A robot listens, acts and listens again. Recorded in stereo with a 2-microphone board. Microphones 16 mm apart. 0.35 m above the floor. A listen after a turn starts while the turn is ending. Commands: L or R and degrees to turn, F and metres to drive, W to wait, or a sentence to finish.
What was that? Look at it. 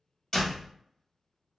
L35
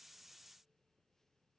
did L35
W
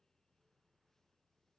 I heard a door slam, but can't make it out now. It was about straight ahead or 110° left.